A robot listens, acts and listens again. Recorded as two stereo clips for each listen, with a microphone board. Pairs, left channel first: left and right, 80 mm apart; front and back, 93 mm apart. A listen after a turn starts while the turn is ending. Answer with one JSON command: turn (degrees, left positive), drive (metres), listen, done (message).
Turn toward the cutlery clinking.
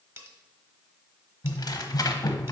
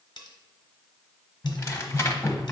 {"turn": -35}
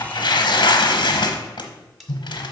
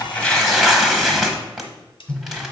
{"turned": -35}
{"done": "Facing the cutlery clinking, 1 to 2 m away."}